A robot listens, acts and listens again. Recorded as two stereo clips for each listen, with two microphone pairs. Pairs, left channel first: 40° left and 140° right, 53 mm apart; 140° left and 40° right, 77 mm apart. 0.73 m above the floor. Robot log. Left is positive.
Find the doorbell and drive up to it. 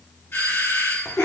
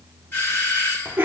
note: The doorbell: 75° left.
cmd yaw +75
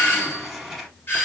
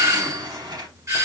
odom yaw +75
cmd fwd 1.0
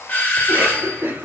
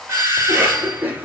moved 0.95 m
cmd fwd 1.0
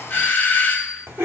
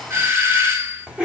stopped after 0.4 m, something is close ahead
end: I am next to the doorbell.